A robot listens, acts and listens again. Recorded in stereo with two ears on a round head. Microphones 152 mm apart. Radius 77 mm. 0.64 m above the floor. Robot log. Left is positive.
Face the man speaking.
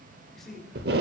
cmd yaw +30
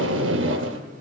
cmd idle
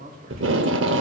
note: So it is at 50° right.
cmd yaw -50
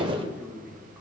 note: The man speaking is now 10° right.
cmd yaw -10
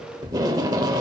cmd idle
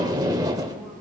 cmd idle
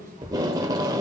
note: The man speaking is now 15° right.
cmd yaw -15
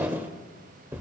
cmd idle
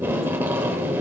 cmd idle
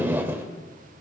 end: Facing where the man speaking came from. I can't hear it now.